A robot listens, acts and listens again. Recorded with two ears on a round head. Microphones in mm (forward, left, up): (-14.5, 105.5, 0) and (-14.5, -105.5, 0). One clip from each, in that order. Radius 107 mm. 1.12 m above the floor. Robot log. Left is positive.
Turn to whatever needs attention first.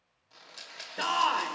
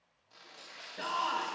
note: The shout: about 45° left or 135° left.
cmd yaw +45
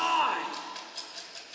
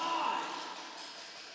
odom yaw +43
note: So it is at 85° left.
cmd yaw +85
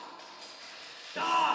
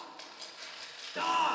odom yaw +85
end: Facing the shout.